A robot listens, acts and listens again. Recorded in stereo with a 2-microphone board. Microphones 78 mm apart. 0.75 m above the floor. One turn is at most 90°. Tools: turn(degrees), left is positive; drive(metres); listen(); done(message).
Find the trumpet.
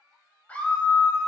listen()
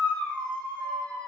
listen()
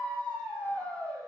done("I can't make out a trumpet, only a scream.")